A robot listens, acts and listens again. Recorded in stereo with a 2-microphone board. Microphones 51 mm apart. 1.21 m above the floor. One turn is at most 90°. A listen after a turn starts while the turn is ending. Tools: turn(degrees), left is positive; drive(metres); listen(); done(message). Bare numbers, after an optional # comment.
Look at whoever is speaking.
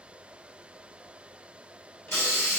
listen()
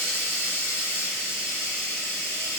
listen()
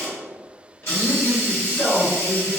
# The man speaking: about 40° left or 140° left.
turn(40)
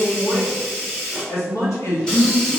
# So it is at 100° left.
turn(90)
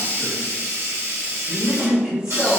# The man speaking is now 15° right.
turn(-15)
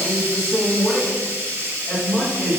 done("Found it: a man speaking, straight ahead, 1 to 2 m away.")